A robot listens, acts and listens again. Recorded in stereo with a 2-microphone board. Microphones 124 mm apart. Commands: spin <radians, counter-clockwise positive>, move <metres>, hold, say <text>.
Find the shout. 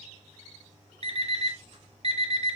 hold
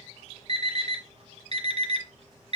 hold
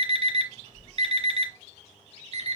say I can't make out a shout to turn to.